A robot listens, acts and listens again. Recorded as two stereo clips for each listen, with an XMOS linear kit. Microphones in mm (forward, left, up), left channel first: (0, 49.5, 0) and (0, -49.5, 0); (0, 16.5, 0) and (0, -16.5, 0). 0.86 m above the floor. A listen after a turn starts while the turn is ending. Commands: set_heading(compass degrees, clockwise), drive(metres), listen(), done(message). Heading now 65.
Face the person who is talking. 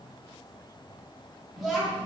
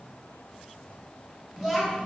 set_heading(95)
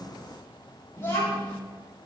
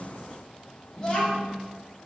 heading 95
set_heading(70)
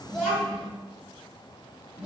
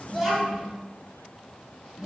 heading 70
done("Found it: a child speaking, straight ahead.")